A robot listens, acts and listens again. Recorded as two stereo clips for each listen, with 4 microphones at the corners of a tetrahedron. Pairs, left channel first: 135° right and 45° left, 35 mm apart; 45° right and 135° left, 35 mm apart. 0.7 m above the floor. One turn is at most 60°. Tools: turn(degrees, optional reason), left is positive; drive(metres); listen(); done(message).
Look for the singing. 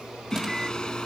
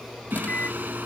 turn(degrees=60, reason="The singing: 155° left.")
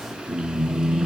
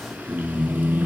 turn(degrees=60, reason="The singing is now 110° left.")
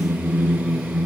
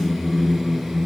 turn(degrees=55, reason="The singing is now 55° left.")
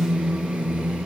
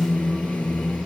done("Facing the singing.")